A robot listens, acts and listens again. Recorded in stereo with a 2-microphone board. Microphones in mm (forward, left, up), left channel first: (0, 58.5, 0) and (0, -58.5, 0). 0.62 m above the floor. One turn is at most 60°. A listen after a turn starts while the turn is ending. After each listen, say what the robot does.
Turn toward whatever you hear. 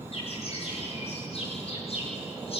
Turn 60° left.
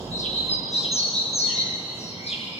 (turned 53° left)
Turn 60° left.
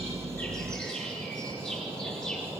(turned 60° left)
Turn 10° left.
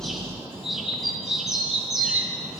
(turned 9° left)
Facing the bird, over 4 m away.